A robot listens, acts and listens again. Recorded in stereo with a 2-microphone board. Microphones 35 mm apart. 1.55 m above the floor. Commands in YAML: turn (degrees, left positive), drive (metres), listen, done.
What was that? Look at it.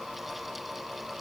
listen: true
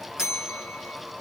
turn: -15
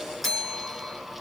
done: "Facing the bell, 1 to 2 m away."